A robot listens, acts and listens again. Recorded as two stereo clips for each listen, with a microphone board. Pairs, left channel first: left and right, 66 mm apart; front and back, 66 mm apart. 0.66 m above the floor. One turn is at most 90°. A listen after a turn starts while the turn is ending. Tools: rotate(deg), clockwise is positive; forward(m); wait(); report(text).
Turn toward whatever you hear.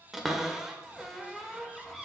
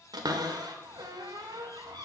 rotate(90)
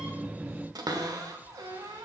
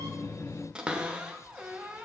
rotate(90)
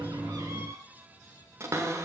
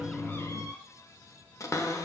rotate(45)
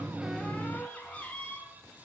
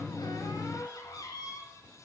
rotate(-20)
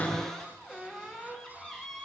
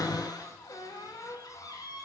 report("Facing the cupboard door, under 1 m away.")